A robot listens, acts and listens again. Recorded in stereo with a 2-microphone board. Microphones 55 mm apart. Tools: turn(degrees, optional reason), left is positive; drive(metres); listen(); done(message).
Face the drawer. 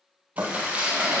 turn(degrees=-70, reason="The drawer: about 70° right or 110° right.")
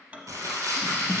turn(degrees=-30, reason="So it is at 30° right.")
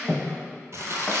done("Facing the drawer.")